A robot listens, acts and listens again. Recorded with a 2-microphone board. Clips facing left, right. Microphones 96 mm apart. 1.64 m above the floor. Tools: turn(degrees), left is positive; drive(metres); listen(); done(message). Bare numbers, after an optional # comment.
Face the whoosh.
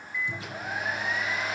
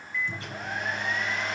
listen()
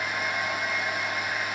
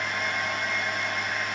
listen()
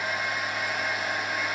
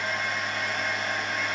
done("I can't make out a whoosh to turn to.")